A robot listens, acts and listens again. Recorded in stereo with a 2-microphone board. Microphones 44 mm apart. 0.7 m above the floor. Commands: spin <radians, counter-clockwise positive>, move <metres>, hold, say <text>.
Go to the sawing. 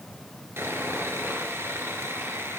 spin -1.22
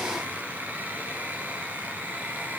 spin -0.70
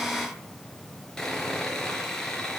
spin 0.17
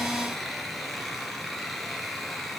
move 1.0
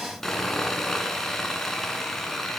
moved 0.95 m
spin 0.17
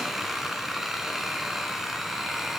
move 1.0
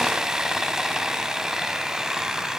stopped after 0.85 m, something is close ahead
spin -0.17
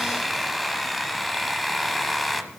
say I am next to the sawing.